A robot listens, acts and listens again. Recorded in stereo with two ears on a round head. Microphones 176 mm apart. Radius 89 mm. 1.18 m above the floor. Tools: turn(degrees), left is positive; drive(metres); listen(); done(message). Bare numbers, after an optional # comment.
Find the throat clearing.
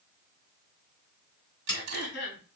# The throat clearing: about 65° left or 115° left.
turn(65)
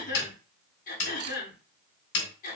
# So it is at 45° left.
turn(45)
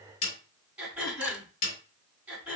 done("Found it: throat clearing, straight ahead, over 4 m away.")